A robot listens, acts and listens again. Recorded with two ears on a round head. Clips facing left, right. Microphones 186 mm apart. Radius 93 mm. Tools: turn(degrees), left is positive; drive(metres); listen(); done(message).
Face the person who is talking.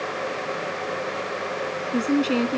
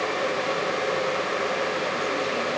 turn(degrees=90)
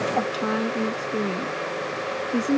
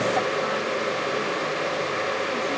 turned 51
turn(degrees=50)
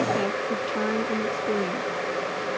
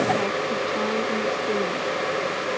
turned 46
listen()
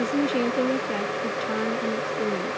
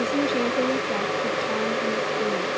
done("Facing the woman speaking.")